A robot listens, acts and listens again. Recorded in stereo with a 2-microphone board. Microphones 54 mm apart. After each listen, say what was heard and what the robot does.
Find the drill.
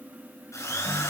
The drill: about 70° left or 110° left. Turn 70° left.
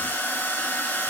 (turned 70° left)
So it is at 40° left. Turn 40° left.
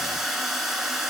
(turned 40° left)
Facing the drill.